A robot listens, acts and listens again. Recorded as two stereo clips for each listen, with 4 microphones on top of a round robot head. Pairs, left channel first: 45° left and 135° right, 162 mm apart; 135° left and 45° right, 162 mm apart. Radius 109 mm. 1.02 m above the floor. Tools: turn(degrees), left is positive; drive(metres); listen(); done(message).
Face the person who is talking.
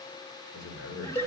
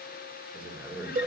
turn(degrees=40)
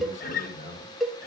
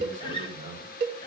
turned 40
done("Facing the man speaking, over 4 m away.")